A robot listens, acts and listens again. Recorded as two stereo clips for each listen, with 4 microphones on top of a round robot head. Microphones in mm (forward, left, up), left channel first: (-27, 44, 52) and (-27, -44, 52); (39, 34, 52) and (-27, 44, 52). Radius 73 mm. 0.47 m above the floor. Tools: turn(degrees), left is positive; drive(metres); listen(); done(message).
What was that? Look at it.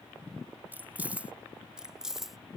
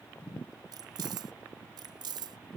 turn(degrees=-175)
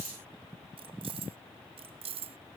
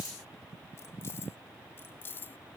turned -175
turn(degrees=-75)
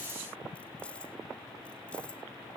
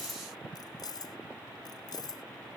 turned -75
turn(degrees=10)
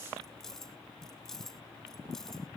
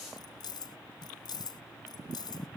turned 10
done("Facing the keys jangling.")